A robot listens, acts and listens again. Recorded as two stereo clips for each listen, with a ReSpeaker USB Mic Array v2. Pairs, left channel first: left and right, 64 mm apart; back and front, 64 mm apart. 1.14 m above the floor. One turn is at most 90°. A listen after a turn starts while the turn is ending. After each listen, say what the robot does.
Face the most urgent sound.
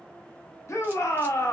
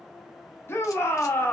Turn 90° left.
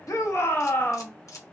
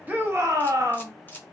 Turn 40° left.
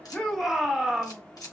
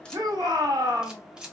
Found it: a shout, straight ahead.